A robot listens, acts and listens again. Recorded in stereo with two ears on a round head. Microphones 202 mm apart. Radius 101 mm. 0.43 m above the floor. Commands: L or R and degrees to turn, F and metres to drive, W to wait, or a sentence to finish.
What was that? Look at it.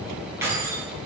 R30
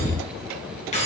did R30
L30
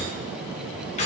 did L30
L30
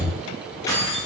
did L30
L15
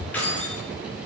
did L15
L10
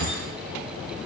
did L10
W
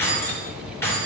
L10
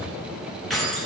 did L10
Found it: keys jangling, straight ahead.